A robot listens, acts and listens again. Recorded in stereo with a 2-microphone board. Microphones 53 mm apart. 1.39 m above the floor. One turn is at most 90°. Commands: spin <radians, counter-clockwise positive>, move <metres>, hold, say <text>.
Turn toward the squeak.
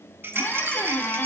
spin 0.61
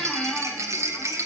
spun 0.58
spin 0.17
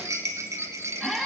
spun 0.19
say Facing the squeak, 1 to 2 m away.